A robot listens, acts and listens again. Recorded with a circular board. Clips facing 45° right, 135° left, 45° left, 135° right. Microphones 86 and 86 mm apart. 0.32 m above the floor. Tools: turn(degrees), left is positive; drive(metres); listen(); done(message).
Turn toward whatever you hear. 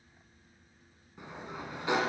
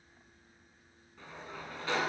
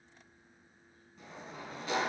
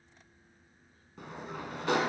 turn(degrees=-115)
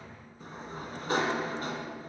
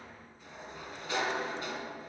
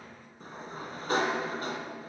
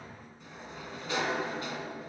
done("Facing the sliding door, 1 to 2 m away.")